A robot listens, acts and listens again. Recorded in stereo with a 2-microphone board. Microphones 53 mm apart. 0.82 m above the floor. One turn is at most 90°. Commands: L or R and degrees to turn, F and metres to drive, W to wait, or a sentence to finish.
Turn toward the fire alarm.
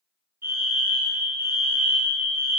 R60
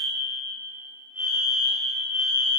R45
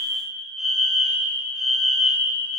Found it: a fire alarm, straight ahead.